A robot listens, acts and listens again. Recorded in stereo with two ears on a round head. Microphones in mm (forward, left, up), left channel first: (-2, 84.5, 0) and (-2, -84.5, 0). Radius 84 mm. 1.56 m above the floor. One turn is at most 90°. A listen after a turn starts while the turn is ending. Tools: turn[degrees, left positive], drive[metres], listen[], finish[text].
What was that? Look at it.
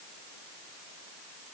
Action: listen[]
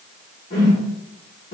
Thought: The whoosh: about 45° left or 135° left.
Action: turn[45]
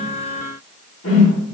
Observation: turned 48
Thought: So it is at 80° left.
Action: turn[80]
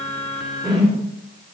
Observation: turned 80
Action: finish[Found it: a whoosh, straight ahead.]